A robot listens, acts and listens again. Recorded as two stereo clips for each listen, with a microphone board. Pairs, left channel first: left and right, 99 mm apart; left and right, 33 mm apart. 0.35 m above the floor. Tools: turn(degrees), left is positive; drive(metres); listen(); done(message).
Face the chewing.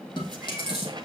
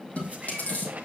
turn(degrees=50)
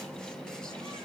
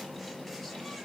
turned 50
listen()
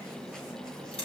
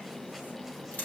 turn(degrees=75)
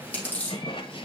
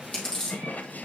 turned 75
turn(degrees=15)
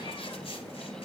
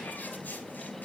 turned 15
listen()
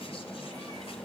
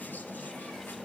listen()
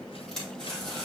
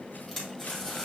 done("Facing the chewing.")